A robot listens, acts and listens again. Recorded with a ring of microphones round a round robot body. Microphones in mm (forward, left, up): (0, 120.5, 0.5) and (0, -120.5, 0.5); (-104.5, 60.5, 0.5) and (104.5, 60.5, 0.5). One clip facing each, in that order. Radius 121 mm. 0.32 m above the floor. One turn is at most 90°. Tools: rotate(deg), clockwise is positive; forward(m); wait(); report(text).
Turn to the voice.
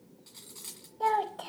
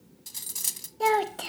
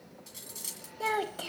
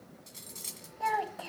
rotate(90)
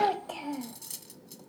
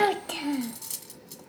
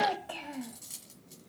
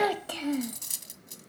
rotate(40)
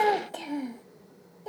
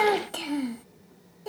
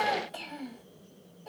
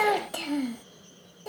rotate(20)
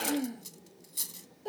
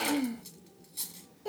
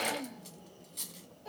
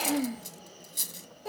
rotate(10)
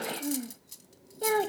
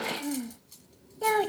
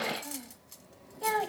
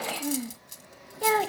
report("Facing the child speaking.")